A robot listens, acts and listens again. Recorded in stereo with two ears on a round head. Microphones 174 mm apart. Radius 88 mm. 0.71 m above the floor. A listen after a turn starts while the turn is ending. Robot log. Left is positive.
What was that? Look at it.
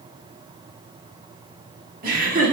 note: The laughter: about 40° right or 140° right.
cmd yaw -40
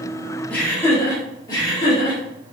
note: So it is at 25° left.
cmd yaw +25
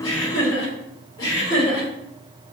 note: The laughter is now 20° left.
cmd yaw +20
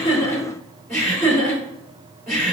end: Facing the laughter, 2 to 4 m away.